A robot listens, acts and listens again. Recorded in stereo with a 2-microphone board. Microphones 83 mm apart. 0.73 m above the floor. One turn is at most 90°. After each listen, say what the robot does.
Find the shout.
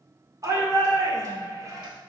Turn 40° right.
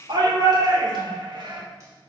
Turn 90° right.
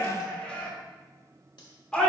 Turn 15° left.
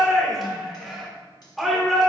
Facing the shout.